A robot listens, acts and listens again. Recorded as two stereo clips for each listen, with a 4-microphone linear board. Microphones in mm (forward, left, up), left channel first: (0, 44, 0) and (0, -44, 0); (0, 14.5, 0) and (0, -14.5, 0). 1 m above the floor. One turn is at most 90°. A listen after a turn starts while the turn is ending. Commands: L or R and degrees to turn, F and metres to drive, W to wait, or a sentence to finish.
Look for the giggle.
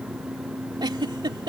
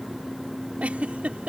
R55
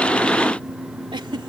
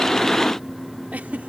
W
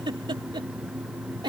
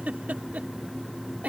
R65
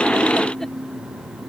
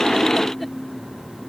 W
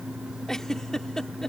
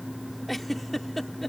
Facing the giggle.